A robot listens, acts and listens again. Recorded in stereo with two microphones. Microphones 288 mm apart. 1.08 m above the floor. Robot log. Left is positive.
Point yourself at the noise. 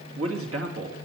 note: The man speaking: about 55° right or 125° right.
cmd yaw -55
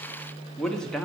end: Found it: a man speaking, straight ahead.